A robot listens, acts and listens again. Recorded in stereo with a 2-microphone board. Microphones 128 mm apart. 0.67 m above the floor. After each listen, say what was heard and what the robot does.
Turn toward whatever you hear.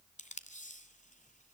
The tape being pulled: about 75° left or 105° left. Turn 75° left.
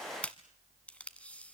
So it is at 10° left. Turn 10° left.
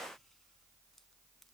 Keep listening.
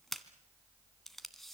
Facing the tape being pulled.